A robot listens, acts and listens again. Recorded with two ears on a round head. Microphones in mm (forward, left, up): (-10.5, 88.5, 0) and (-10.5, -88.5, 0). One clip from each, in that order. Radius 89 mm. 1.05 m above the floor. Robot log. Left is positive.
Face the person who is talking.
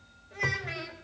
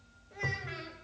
note: The child speaking: about 15° left or 165° left.
cmd yaw +15
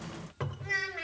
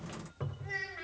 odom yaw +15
note: So it is at 150° left.
cmd yaw +150
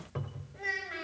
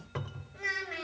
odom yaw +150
note: The child speaking is now 20° right.
cmd yaw -20
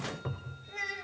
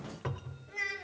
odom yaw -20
end: Facing the child speaking.